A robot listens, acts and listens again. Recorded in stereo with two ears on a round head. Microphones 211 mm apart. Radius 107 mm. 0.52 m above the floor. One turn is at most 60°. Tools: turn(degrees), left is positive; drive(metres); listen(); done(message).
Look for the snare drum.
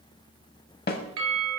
turn(degrees=45)
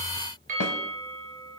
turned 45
listen()
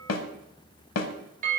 turn(degrees=60)
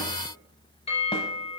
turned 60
turn(degrees=30)
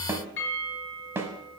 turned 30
turn(degrees=-10)
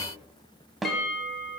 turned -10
done("Facing the snare drum.")